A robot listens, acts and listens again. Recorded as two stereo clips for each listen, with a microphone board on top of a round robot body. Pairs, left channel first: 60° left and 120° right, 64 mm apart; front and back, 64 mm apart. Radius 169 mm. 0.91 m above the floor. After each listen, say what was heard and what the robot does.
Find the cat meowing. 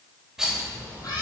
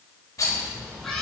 The cat meowing: 85° left. Turn 85° left.
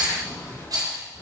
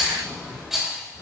The cat meowing is now 15° left. Turn 15° left.
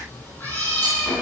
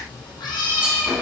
The cat meowing is now 10° right. Turn 10° right.
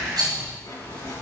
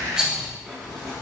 Keep listening.
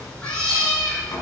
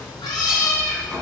The cat meowing is now 15° right. Turn 15° right.
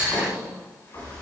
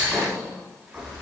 Keep listening.
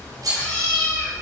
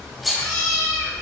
The cat meowing is now 10° right. Turn 10° right.
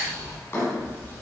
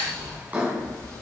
Found it: a cat meowing, straight ahead, over 4 m away.